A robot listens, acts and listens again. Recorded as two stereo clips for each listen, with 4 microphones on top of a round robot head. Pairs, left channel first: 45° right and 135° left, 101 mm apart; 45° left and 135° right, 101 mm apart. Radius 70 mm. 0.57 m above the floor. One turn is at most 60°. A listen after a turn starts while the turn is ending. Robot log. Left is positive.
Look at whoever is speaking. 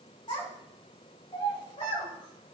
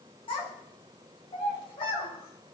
end: Found it: a child speaking, straight ahead.